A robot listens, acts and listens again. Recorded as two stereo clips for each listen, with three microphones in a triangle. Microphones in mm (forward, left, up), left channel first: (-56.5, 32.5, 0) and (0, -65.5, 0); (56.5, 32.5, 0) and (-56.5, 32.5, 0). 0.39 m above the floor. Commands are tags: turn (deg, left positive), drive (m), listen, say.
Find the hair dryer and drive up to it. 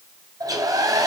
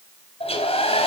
<turn deg="-10"/>
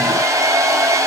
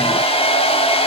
<drive m="1.0"/>
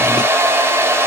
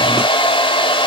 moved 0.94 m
<drive m="1.0"/>
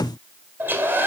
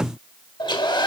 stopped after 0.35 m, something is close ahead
<say>I am next to the hair dryer.</say>